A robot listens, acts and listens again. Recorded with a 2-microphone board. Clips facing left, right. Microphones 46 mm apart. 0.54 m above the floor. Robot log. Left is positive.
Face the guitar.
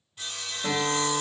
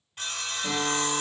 note: The guitar: about 35° left or 145° left.
cmd yaw +35
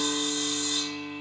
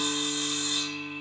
cmd idle
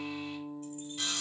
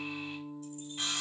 end: Found it: a guitar, straight ahead, 1 to 2 m away.